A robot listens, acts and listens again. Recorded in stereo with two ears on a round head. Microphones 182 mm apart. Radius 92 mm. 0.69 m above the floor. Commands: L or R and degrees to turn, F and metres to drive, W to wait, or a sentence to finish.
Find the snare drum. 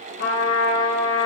W
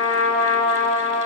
W
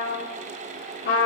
I can't make out a snare drum to turn to.